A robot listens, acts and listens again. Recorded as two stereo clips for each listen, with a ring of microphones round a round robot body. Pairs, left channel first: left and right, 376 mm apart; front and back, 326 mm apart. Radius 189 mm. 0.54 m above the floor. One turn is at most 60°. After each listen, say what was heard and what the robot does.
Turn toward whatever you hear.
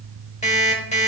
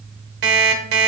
The alarm clock: 165° left. Turn 60° left.
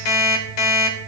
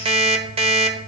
The alarm clock is now 105° left. Turn 60° left.
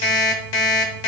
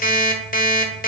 The alarm clock is now 65° left. Turn 60° left.
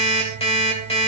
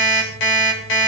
The alarm clock is now 15° left. Turn 15° left.
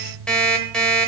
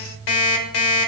Facing the alarm clock.